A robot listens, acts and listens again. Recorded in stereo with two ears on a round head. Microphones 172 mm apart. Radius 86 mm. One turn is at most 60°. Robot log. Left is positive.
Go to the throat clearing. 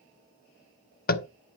cmd idle
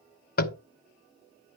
cmd idle
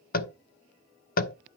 end: I can't make out throat clearing to turn to.